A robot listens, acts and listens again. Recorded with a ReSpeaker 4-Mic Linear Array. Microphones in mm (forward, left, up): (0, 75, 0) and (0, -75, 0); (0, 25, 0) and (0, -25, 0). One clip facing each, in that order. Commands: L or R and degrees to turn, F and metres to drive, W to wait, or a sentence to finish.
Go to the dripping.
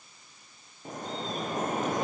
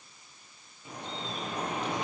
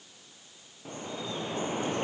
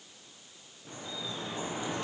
L45
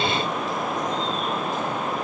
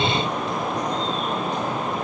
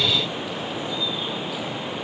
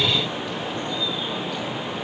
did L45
F1.0
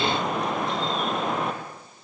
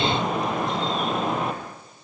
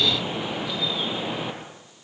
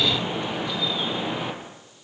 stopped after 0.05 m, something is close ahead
Blocked. The dripping is further on, straight ahead.